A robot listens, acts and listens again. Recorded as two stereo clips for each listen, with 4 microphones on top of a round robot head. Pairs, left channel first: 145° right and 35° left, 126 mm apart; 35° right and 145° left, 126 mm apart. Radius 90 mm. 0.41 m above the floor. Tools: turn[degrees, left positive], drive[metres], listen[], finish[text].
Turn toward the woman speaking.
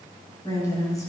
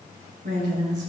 Thought: The woman speaking: 150° left.
Action: turn[150]
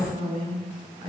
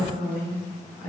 Thought: The woman speaking is now 25° right.
Action: turn[-25]
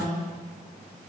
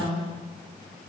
Action: finish[Found it: a woman speaking, straight ahead, over 4 m away.]